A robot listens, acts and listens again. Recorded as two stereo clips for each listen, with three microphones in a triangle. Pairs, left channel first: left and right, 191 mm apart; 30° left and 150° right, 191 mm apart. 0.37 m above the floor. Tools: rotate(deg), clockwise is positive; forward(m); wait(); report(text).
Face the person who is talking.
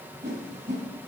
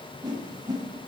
wait()
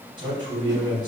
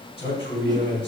rotate(30)
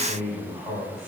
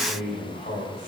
report("Found it: a man speaking, straight ahead.")